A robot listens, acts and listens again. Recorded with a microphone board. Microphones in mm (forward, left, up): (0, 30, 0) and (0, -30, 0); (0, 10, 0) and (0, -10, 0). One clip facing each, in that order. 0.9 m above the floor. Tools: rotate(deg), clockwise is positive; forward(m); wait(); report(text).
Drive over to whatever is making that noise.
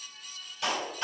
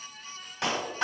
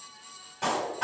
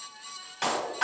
rotate(90)
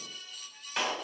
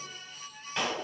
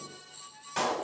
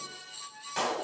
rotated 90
forward(1.0)
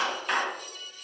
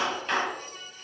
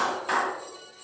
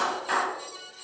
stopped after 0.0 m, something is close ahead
report("Blocked. The clap is further on, straight ahead.")